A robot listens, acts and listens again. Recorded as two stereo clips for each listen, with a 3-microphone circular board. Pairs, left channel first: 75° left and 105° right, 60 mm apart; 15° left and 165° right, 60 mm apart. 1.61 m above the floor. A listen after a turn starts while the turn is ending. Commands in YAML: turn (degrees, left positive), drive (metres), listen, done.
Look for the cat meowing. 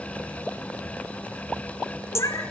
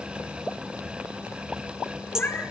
turn: 75
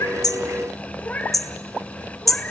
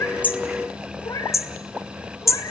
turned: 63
turn: 10
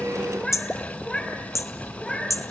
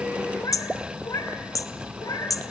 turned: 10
done: "Facing the cat meowing, 2 to 4 m away."